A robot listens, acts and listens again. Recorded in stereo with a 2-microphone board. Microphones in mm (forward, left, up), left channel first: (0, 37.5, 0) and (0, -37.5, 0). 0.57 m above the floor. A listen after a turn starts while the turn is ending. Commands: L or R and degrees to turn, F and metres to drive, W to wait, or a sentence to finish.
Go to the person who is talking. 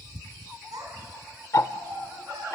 R60
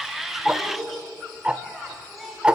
F1.0
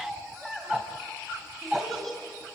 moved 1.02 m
F1.0
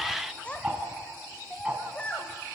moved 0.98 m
L20
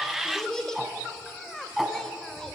L10
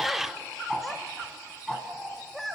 F1.0
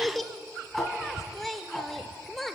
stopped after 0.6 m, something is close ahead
I am next to the child speaking.